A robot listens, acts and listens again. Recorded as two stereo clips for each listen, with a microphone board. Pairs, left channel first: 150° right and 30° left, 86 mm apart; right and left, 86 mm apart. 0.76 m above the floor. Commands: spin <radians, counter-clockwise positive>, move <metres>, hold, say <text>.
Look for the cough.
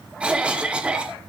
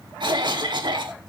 spin 1.83
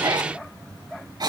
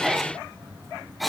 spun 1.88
say Found it: a cough, straight ahead, 2 to 4 m away.